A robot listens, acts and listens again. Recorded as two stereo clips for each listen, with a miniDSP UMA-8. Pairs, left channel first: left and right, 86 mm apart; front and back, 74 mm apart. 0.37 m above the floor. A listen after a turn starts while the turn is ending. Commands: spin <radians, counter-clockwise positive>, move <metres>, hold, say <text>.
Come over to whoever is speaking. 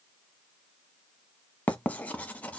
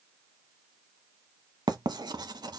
hold
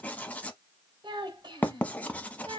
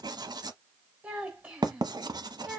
spin -1.92
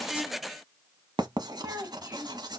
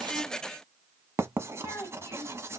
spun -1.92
spin -0.70
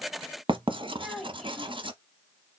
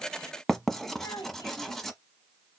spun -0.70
move 1.0
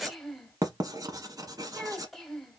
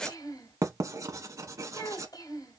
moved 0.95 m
move 1.0
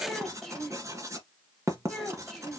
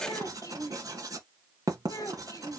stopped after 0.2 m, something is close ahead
say I am next to the child speaking.